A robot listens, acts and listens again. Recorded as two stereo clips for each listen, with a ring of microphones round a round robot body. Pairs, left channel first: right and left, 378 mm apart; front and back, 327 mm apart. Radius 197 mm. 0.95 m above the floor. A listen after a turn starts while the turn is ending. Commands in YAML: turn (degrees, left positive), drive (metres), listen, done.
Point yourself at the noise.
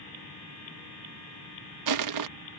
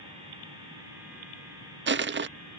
turn: 125
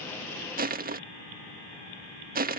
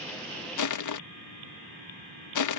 turn: 25
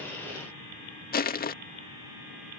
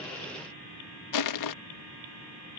turn: -25
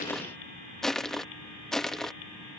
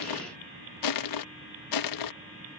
done: "Found it: crushing, straight ahead."